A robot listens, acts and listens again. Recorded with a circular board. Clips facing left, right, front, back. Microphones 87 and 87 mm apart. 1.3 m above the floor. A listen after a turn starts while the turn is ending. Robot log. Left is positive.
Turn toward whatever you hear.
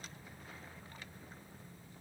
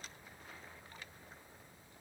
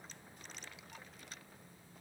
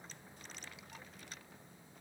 cmd idle
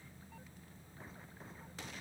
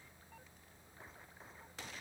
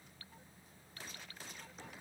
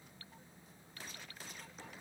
cmd idle
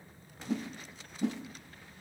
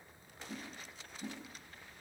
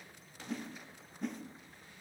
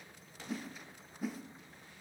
note: The whoosh: 95° left.
cmd yaw +95
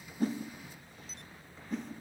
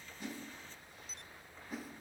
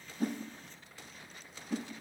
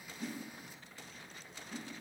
end: Found it: a whoosh, straight ahead.